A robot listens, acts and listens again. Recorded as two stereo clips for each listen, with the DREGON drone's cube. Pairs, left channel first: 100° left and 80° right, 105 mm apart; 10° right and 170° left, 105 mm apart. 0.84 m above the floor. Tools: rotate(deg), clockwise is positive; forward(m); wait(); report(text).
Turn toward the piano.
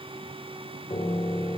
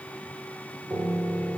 rotate(-85)
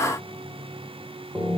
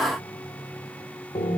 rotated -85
report("Found it: a piano, straight ahead, 2 to 4 m away.")